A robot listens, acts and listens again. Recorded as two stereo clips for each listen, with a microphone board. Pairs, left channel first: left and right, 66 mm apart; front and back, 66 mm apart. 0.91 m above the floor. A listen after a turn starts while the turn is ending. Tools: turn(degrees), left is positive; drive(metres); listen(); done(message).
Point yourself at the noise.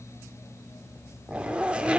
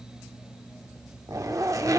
turn(degrees=-160)
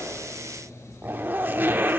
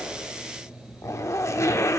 turn(degrees=-35)
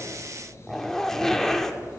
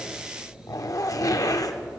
done("Found it: a zipper, straight ahead, under 1 m away.")